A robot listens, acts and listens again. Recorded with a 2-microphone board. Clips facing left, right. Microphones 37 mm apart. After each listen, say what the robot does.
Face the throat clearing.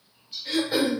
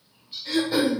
Turn 30° left.
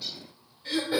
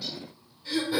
Turn 140° left.
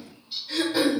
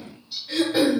Turn 20° right.
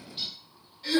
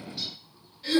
Facing the throat clearing, 1 to 2 m away.